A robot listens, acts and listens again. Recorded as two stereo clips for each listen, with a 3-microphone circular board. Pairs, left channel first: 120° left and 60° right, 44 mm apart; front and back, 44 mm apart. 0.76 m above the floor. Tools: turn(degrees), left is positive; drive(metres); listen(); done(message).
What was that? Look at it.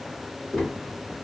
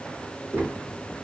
turn(degrees=-155)
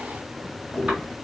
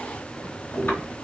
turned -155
done("Facing the tapping.")